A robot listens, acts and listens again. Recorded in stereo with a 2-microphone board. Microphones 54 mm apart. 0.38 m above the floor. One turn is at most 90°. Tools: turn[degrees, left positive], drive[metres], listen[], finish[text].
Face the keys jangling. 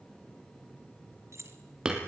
Thought: The keys jangling: about 60° right or 120° right.
Action: turn[-60]
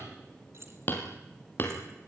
Thought: So it is at 50° right.
Action: turn[-50]
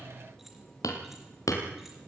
Action: listen[]
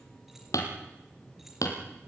Action: listen[]
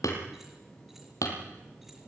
Action: finish[Facing where the keys jangling came from. I can't hear it now.]